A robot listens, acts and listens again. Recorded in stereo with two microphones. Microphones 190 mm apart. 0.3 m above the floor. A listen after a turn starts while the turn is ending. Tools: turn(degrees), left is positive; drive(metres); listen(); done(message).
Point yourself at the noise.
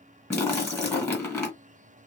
turn(degrees=30)
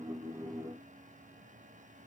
listen()
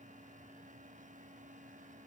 done("I heard a splash, but can't make it out now. It was about 20° right or 140° left.")